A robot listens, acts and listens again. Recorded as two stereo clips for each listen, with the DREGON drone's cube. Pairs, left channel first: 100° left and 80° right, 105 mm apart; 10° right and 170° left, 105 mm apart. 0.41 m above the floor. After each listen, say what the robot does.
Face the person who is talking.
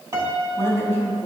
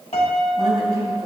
Turn 165° left.
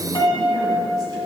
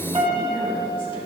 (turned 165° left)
Keep listening.
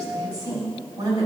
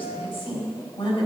Turn 30° right.
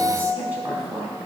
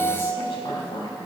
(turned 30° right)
Turn 10° right.
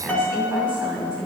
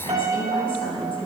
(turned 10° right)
Found it: a woman speaking, straight ahead, 2 to 4 m away.